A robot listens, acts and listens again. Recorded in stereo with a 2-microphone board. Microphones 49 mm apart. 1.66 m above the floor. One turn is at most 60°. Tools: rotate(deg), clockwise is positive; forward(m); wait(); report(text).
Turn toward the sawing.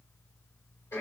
wait()
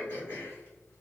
wait()
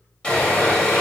rotate(-20)
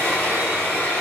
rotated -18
rotate(-60)
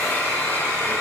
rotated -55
rotate(-60)
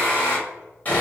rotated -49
rotate(-35)
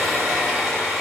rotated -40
report("Facing the sawing.")